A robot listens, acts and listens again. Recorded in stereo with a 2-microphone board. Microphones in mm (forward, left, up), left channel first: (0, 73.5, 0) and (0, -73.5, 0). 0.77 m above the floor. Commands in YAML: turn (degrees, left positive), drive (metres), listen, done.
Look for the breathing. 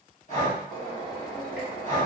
turn: 55
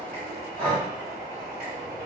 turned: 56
turn: 10
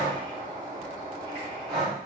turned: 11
done: "Facing the breathing, 1 to 2 m away."